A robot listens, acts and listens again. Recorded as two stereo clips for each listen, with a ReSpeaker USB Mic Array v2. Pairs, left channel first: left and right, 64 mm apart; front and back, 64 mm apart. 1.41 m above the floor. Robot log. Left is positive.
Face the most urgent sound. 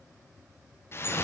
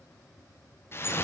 cmd idle
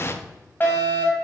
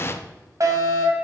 note: The fire alarm: 150° left.
cmd yaw +150
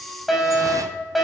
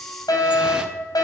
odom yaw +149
end: Found it: a fire alarm, straight ahead, 2 to 4 m away.